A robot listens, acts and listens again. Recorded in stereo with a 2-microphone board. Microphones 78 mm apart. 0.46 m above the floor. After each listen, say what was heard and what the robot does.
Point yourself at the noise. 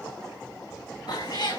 The cat meowing: about 65° left or 115° left. Turn 65° left.
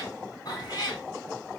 So it is at 55° left. Turn 55° left.
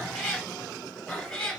Facing the cat meowing, 2 to 4 m away.